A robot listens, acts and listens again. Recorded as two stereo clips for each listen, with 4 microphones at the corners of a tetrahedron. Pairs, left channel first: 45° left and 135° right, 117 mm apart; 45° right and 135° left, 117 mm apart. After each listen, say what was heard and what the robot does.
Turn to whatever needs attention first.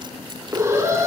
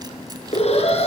The alarm: 70° right. Turn 70° right.
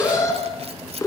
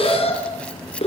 The alarm is now 15° right. Turn 15° right.
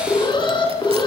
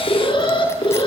Found it: an alarm, straight ahead.